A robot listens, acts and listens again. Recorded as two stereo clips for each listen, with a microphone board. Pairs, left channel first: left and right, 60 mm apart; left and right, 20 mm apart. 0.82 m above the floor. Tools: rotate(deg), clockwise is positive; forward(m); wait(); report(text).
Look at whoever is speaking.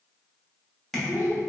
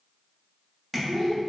rotate(-40)
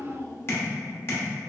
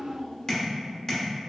rotate(-95)
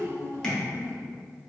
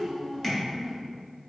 rotate(35)
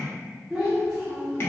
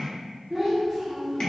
report("Facing the child speaking.")